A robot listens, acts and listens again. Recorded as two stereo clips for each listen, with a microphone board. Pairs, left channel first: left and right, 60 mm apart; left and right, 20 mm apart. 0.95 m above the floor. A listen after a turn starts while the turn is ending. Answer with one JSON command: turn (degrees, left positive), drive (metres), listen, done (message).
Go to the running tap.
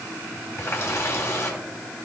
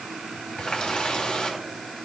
{"turn": 45}
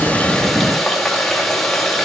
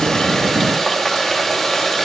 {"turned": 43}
{"drive": 1.0}
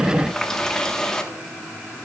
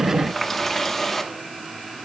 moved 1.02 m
{"turn": 10}
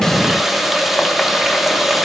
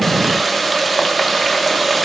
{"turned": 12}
{"drive": 1.0}
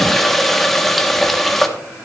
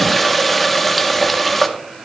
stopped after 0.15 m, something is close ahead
{"done": "I am next to the running tap."}